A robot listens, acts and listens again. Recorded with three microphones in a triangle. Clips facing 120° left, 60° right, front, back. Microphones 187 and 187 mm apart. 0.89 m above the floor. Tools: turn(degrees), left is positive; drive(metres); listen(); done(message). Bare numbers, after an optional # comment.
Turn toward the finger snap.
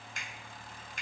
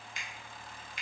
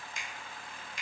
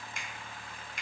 # The finger snap: 155° left.
turn(155)
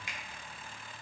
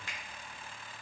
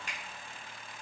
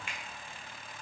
# The finger snap is now 45° left.
turn(45)
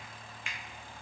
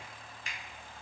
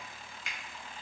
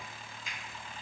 # The finger snap is now 10° right.
turn(-10)
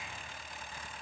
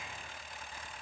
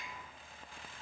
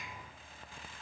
listen()
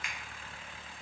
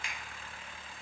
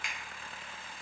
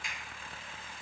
done("Found it: a finger snap, straight ahead.")